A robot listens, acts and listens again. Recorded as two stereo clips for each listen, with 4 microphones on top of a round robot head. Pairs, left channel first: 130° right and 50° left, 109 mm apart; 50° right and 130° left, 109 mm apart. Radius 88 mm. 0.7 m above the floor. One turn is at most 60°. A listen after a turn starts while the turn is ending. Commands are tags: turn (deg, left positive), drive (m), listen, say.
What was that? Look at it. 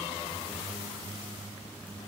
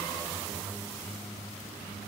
<listen/>
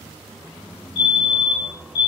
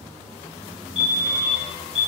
<turn deg="-60"/>
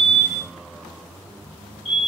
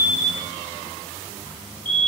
<turn deg="-60"/>
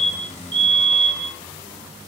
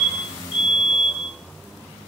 <turn deg="-20"/>
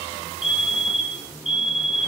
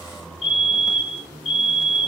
<say>Found it: a fire alarm, straight ahead, 2 to 4 m away.</say>